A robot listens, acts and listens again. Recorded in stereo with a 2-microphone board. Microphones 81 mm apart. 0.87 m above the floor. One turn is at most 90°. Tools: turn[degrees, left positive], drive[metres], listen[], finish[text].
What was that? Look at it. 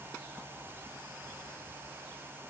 Action: listen[]
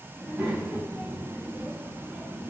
Action: turn[-30]
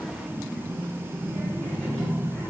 Thought: So it is at 20° left.
Action: turn[20]
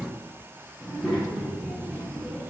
Action: finish[Facing the child speaking, over 4 m away.]